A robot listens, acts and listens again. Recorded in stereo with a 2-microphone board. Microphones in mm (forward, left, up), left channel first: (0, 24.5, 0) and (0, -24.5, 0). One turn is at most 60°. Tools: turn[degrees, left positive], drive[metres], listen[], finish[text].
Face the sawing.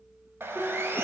Thought: The sawing: about 55° right or 125° right.
Action: turn[-55]
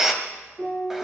Thought: So it is at 10° right.
Action: turn[-10]
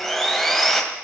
Action: finish[Facing the sawing.]